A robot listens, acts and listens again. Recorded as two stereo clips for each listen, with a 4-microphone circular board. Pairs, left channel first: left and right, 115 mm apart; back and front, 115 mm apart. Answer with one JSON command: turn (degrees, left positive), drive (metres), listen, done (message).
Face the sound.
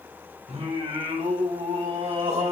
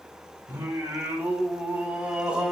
{"turn": -80}
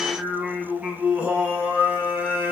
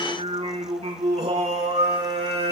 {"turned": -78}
{"turn": -20}
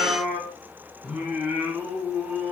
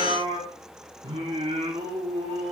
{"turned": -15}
{"turn": -15}
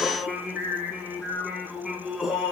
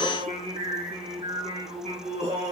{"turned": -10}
{"done": "Facing the singing."}